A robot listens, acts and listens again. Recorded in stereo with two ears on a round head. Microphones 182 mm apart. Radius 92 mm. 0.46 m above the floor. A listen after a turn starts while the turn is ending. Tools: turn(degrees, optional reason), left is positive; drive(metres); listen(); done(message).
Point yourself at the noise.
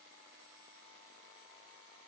listen()
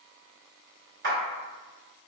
turn(degrees=-55, reason="The clap: about 55° right or 125° right.")
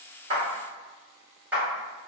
turn(degrees=-10, reason="So it is at 10° right.")
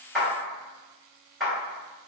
done("Facing the clap, 1 to 2 m away.")